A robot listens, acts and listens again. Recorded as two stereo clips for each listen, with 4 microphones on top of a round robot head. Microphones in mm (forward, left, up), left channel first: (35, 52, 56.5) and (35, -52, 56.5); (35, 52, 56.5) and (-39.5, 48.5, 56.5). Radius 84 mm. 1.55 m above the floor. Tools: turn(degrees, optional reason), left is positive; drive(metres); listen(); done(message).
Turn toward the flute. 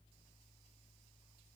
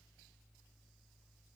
listen()
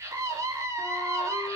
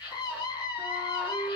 done("Found it: a flute, straight ahead.")